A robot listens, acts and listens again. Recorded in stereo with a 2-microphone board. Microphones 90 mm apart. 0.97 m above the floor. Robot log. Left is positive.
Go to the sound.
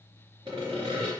note: The sawing: about 65° right or 115° right.
cmd yaw -65
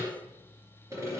note: So it is at 35° right.
cmd yaw -35
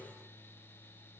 cmd idle
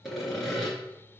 cmd fwd 1.0
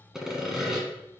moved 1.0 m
cmd fwd 1.0
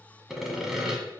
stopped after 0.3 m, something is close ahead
end: Arrived at the sawing, straight ahead.